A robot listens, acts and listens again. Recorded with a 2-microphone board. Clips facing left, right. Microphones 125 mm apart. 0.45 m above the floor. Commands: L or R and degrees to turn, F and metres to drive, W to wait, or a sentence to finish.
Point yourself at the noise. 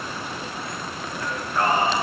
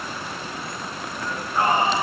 R20
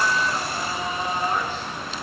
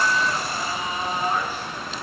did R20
R30
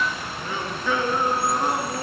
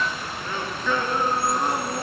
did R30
Facing the singing.